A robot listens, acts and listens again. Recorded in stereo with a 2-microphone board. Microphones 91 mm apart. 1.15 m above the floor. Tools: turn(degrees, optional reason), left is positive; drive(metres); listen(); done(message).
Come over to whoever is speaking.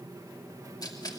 listen()
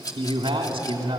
turn(degrees=-90)
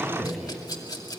drive(metres=1.0)
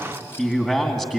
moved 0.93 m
drive(metres=1.0)
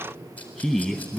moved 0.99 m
turn(degrees=-10, reason="The man speaking is now 10° right.")
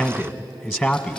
drive(metres=1.0)
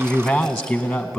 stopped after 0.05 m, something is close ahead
done("Arrived at the man speaking, straight ahead.")